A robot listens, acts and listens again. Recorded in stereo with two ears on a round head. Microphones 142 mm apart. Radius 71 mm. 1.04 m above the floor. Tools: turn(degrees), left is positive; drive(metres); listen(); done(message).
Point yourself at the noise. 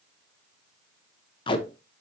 turn(degrees=30)
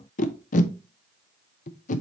turn(degrees=115)
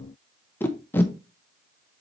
turn(degrees=15)
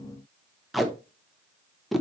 done("Found it: tape being pulled, straight ahead.")